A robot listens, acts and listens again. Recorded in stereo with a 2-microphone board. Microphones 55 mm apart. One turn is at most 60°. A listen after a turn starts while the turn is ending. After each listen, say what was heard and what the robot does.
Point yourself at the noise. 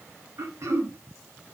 The throat clearing: about 65° right or 115° right. Turn 60° right.
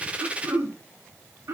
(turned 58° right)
So it is at 60° right. Turn 60° right.
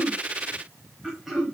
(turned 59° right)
Found it: throat clearing, straight ahead.